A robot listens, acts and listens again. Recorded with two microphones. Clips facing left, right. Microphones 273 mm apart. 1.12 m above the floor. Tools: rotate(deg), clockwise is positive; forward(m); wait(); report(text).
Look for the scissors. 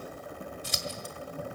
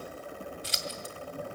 rotate(-50)
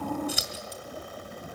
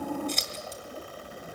rotate(-10)
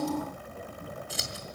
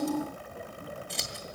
report("Facing the scissors.")